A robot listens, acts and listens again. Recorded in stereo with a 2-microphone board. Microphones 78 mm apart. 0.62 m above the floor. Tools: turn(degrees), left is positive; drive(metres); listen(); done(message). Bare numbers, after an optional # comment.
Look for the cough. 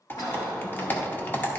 # The cough: about 50° left or 130° left.
turn(50)
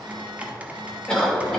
# So it is at 10° left.
turn(10)
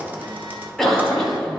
done("Found it: a cough, straight ahead.")